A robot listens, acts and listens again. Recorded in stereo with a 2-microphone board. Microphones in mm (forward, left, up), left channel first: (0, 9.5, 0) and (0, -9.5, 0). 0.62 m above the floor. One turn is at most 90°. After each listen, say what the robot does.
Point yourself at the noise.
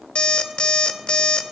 Turn 90° left.
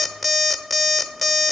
Found it: an alarm clock, straight ahead, under 1 m away.